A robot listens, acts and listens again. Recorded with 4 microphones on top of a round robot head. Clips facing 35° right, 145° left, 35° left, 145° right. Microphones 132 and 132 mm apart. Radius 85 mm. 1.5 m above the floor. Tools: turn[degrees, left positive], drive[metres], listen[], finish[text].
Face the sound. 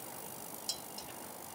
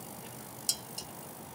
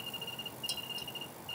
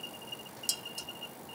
Thought: The dishes clattering: 175° left.
Action: turn[175]
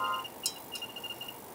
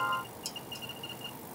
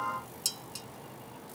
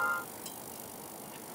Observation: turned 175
Thought: The dishes clattering is now 25° left.
Action: turn[25]
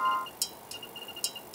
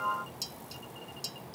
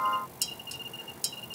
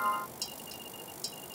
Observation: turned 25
Action: finish[Found it: dishes clattering, straight ahead.]